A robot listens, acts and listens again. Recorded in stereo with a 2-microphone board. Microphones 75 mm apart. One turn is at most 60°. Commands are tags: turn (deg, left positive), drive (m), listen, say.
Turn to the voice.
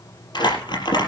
<listen/>
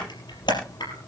<listen/>
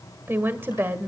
<turn deg="-30"/>
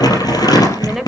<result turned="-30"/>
<say>Found it: a woman speaking, straight ahead, 1 to 2 m away.</say>